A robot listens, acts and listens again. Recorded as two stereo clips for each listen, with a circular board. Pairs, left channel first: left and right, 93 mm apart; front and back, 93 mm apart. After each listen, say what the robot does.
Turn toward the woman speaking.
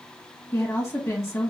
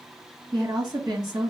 Turn 145° left.
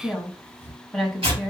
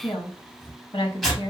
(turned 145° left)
Found it: a woman speaking, straight ahead, 1 to 2 m away.